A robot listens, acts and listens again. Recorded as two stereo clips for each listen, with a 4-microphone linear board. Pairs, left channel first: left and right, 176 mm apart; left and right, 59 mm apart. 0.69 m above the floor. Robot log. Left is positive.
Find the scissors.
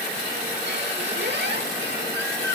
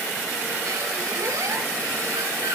cmd idle
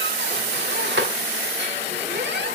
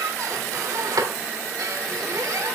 cmd idle
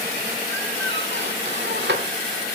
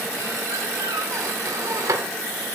end: I can't make out scissors, only a squeak.